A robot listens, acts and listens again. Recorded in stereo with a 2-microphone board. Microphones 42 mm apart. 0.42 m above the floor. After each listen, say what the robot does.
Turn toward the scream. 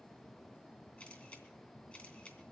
Keep listening.
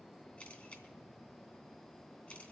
Keep listening.
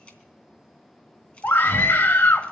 Turn 60° left.
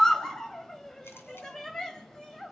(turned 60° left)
Turn 10° left.
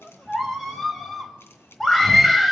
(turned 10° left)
Facing the scream, 1 to 2 m away.